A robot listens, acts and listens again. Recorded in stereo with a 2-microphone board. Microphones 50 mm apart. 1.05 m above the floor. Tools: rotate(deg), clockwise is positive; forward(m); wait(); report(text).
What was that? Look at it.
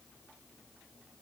wait()
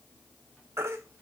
rotate(65)
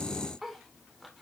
wait()
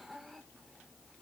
wait()
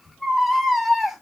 report("Facing the baby crying.")